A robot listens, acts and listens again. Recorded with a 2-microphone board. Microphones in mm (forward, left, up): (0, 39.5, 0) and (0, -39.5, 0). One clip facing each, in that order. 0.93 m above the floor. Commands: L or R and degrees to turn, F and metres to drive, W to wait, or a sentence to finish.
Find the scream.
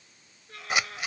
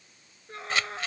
R30
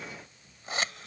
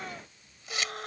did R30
R120
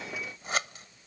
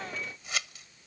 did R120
W
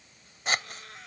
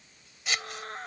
R45
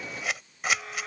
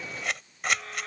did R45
Facing the scream.